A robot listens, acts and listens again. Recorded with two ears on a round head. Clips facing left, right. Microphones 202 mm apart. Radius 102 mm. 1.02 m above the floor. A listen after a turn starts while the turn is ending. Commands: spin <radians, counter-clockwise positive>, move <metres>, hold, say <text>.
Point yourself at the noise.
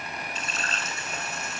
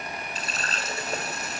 spin -0.61
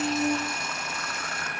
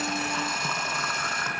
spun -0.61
spin -2.01
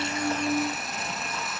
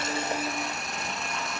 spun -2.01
hold
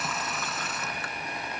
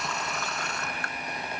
say Facing the running tap.